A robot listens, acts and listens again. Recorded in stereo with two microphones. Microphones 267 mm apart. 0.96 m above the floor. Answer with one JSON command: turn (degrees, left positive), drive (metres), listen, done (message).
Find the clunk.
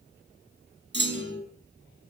{"turn": -40}
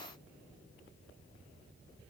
{"listen": true}
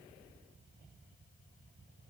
{"done": "I heard a clunk, but can't make it out now. It was about straight ahead or 100° right."}